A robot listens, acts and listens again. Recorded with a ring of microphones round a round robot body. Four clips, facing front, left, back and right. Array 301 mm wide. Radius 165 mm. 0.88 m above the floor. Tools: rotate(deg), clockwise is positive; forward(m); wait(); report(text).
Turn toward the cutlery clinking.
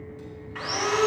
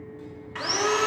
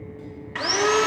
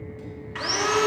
wait()
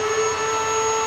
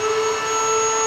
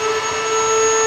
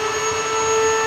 wait()
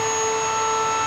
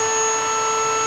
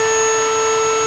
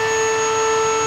report("I can't make out cutlery clinking, only sawing.")